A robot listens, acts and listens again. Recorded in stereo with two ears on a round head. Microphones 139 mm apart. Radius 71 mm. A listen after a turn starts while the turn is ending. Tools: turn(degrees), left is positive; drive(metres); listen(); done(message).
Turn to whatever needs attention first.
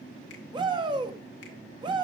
turn(degrees=-30)
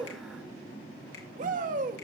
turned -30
turn(degrees=-115)
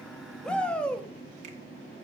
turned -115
turn(degrees=10)
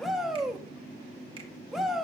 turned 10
done("Facing the shout, 1 to 2 m away.")